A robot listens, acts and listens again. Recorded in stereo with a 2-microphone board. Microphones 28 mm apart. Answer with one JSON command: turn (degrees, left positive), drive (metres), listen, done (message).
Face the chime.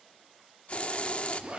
{"listen": true}
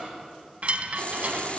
{"turn": -50}
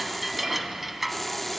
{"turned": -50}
{"done": "Found it: a chime, straight ahead, under 1 m away."}